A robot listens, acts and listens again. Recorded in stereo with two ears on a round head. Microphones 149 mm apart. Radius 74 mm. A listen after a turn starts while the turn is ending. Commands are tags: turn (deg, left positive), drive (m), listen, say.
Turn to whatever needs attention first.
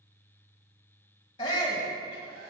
<turn deg="25"/>
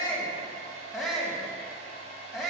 <say>Facing the shout, 2 to 4 m away.</say>